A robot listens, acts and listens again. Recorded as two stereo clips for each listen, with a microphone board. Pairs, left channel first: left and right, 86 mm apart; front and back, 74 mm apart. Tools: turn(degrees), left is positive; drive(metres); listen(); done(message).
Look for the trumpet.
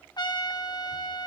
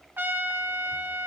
turn(degrees=120)
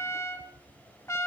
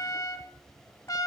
turn(degrees=35)
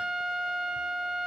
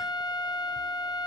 turn(degrees=-10)
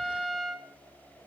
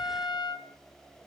done("Facing the trumpet.")